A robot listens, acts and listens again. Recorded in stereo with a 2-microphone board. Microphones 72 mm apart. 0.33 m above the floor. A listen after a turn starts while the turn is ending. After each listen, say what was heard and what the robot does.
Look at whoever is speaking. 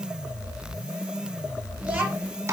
Turn 30° right.
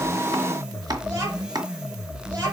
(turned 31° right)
So it is at 140° right. Turn 140° right.
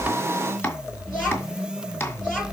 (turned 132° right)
The child speaking is now 10° right. Turn 10° right.
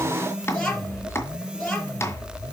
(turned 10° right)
Found it: a child speaking, straight ahead, 2 to 4 m away.